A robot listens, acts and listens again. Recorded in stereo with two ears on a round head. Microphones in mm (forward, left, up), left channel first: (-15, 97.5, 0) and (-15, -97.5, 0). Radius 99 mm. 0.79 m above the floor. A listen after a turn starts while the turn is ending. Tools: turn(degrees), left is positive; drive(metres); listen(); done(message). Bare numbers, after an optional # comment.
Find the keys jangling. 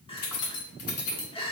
turn(90)
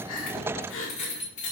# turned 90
# So it is at 35° left.
turn(35)
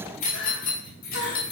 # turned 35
# The keys jangling is now 45° left.
turn(45)
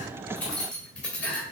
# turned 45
done("Found it: keys jangling, straight ahead.")